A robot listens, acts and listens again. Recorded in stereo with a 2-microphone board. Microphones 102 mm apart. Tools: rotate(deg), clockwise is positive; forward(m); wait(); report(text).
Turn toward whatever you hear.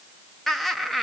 rotate(-30)
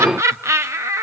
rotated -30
rotate(25)
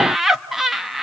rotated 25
report("Found it: laughter, straight ahead, 1 to 2 m away.")